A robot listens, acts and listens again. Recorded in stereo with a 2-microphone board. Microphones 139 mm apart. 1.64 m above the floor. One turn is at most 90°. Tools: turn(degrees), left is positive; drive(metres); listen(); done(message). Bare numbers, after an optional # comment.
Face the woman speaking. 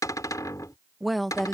turn(30)
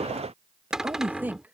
# So it is at 10° right.
turn(-10)
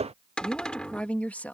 # The woman speaking is now 10° left.
turn(10)
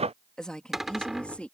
# The woman speaking is now 10° left.
turn(10)
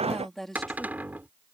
done("Facing the woman speaking.")